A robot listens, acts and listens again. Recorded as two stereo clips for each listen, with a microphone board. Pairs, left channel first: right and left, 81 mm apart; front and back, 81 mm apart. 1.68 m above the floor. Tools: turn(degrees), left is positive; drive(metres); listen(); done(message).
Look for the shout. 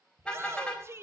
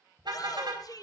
turn(degrees=35)
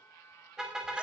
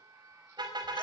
listen()
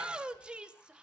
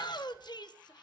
turn(degrees=15)
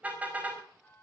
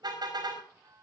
listen()
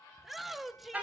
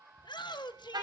done("Found it: a shout, straight ahead.")